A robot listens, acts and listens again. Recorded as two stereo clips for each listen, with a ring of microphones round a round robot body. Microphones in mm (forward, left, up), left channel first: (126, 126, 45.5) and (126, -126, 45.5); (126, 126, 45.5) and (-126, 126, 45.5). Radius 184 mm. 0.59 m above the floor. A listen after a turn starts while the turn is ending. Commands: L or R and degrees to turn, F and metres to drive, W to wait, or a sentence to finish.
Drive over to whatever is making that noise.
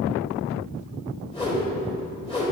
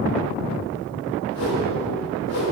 L20
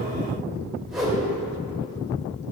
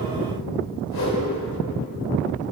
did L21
F1.0
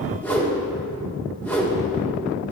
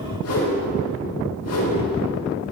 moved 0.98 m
F1.0
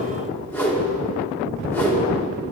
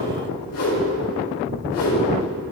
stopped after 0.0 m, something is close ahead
L10
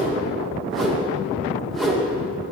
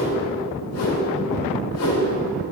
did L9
Arrived at the whoosh, straight ahead.